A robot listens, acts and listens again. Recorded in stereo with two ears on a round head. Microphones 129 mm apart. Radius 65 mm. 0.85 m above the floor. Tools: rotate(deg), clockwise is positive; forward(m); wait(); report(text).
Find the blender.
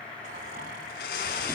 rotate(-70)
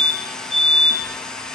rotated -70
report("Found it: a blender, straight ahead.")